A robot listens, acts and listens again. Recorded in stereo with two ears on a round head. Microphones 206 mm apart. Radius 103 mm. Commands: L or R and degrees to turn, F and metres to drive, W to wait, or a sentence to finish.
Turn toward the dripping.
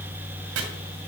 W
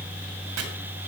W
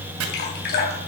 L45
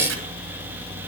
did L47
W
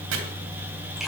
W
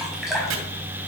Found it: dripping, straight ahead.